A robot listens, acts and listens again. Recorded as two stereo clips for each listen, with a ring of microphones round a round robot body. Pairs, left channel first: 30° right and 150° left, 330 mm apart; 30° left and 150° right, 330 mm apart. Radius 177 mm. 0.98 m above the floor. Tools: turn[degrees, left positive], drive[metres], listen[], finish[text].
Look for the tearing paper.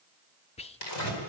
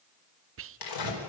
Thought: The tearing paper: 10° left.
Action: turn[10]
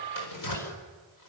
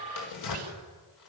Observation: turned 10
Action: finish[Facing the tearing paper.]